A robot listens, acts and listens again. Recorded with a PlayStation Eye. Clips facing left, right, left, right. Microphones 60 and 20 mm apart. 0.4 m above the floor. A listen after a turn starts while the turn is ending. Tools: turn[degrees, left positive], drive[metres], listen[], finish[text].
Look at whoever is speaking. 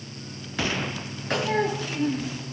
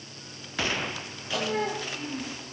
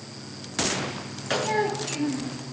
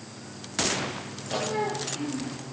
Thought: The child speaking: about 65° left or 115° left.
Action: turn[65]
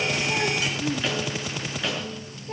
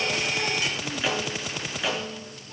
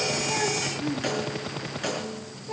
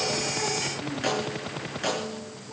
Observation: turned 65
Thought: So it is at 50° left.
Action: turn[50]
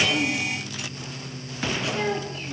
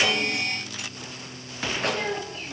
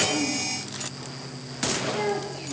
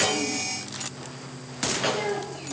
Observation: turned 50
Action: finish[Facing the child speaking.]